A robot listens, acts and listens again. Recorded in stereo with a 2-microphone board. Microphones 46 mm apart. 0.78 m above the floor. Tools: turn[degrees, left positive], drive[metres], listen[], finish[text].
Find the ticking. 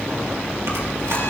Action: listen[]
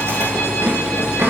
Action: listen[]
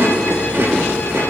Action: finish[I can't make out ticking, only chewing.]